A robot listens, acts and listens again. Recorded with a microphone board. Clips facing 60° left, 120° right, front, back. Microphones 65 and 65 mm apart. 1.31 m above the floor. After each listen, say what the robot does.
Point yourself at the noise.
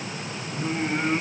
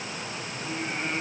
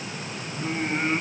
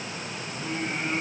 Turn 45° left.
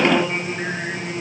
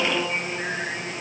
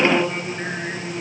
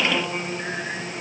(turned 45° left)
Turn 10° right.
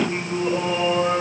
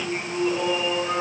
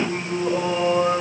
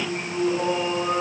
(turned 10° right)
Found it: singing, straight ahead.